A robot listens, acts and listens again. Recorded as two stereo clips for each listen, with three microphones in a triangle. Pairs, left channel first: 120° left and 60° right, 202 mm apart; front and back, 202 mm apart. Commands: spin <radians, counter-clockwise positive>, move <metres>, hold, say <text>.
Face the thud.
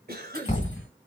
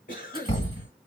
spin 1.05
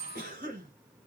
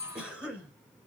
say Facing where the thud came from. I can't hear it now.